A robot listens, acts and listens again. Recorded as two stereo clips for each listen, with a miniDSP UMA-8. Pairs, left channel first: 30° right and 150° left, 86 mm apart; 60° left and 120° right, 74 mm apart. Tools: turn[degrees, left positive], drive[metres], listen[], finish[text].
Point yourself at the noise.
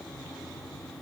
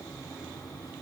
Action: listen[]
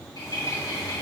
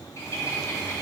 Thought: The bird: 10° left.
Action: turn[10]
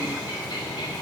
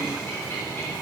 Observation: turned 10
Action: finish[Facing the bird.]